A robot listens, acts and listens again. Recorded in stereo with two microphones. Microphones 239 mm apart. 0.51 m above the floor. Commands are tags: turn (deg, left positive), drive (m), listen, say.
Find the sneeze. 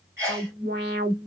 <turn deg="-30"/>
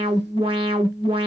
<listen/>
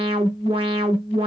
<say>I heard a sneeze, but can't make it out now. It was about 20° left or 140° right.</say>